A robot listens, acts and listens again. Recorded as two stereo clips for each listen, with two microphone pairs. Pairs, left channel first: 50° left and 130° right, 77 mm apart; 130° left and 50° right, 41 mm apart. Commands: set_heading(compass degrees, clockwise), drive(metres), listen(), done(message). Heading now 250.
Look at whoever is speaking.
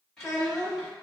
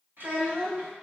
set_heading(280)
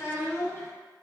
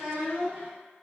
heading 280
done("Found it: a child speaking, straight ahead, 1 to 2 m away.")